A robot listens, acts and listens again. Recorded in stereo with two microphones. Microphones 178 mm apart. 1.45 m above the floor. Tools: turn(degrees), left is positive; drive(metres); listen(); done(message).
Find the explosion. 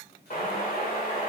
turn(degrees=55)
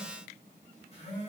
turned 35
listen()
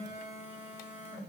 done("I heard an explosion, but can't make it out now. It was about 20° left or 90° left.")